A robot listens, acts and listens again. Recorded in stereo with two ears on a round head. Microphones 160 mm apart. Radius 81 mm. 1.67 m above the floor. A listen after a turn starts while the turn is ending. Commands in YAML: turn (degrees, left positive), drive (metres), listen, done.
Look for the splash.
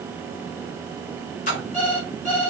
turn: 45
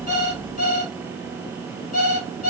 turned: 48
listen: true
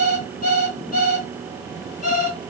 done: "I heard a splash, but can't make it out now. It was about straight ahead or 85° left."